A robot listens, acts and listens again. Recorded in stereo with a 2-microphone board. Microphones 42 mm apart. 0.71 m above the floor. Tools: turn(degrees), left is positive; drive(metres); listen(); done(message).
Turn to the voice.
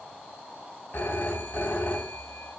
listen()
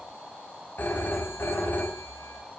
listen()
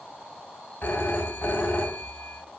done("I can't make out anyone speaking to turn to.")